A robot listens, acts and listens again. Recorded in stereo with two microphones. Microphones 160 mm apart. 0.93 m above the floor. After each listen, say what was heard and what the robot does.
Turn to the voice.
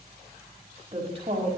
The woman speaking: about 40° right or 140° right. Turn 40° right.
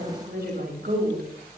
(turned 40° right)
So it is at 105° right. Turn 105° right.
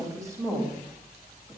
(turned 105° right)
The woman speaking is now 20° right. Turn 20° right.
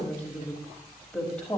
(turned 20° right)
Found it: a woman speaking, straight ahead, over 4 m away.